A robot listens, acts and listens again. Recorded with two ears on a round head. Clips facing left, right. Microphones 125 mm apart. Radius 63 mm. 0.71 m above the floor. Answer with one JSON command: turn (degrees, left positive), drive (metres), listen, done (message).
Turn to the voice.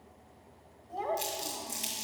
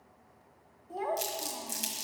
{"turn": -30}
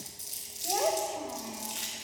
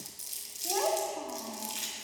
{"turn": 15}
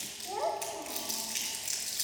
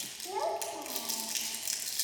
{"done": "Facing the child speaking."}